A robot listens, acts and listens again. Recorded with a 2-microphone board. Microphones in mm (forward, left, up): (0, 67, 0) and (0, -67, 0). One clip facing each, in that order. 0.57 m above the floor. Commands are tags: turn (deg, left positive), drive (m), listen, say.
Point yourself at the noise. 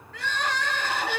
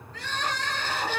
<turn deg="90"/>
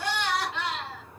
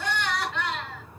<turn deg="10"/>
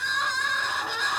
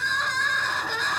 <say>Found it: crying, straight ahead, over 4 m away.</say>